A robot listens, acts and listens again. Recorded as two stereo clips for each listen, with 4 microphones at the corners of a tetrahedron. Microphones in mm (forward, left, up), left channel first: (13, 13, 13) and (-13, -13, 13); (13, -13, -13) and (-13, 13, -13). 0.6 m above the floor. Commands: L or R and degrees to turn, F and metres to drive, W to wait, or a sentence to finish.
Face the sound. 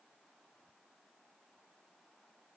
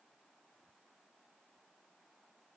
W
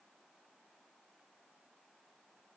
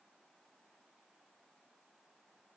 W
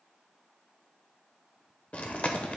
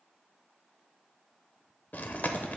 R10
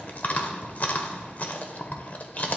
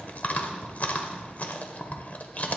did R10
Facing the chewing.